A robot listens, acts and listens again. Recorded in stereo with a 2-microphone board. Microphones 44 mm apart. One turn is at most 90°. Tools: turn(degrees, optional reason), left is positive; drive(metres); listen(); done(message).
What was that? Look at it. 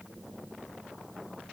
listen()
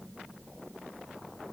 listen()
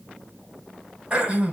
turn(degrees=-30, reason="The throat clearing: about 30° right or 150° right.")
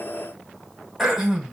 done("Found it: throat clearing, straight ahead.")